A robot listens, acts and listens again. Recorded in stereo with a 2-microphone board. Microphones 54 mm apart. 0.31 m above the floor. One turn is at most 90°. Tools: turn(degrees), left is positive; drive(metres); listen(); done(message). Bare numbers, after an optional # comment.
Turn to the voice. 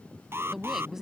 turn(-30)
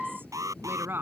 # So it is at 135° right.
turn(-90)
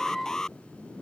# Nothing new. It was at 45° right.
turn(-45)
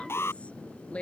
# The woman speaking is now 20° left.
turn(20)
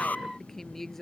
done("Facing the woman speaking.")